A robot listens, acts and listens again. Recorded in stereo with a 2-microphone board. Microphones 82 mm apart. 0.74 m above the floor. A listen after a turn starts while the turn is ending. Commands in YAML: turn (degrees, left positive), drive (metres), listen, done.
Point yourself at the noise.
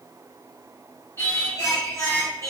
turn: 40
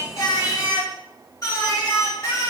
turn: 35
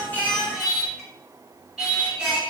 turn: -10
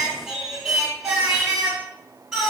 done: "Found it: singing, straight ahead."